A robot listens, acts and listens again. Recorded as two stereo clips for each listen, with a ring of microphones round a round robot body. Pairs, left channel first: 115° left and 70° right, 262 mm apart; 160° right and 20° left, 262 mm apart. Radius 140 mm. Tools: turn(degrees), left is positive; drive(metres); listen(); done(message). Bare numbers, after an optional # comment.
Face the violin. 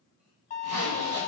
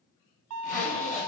# The violin: 50° left.
turn(50)
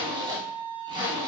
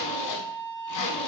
done("Found it: a violin, straight ahead.")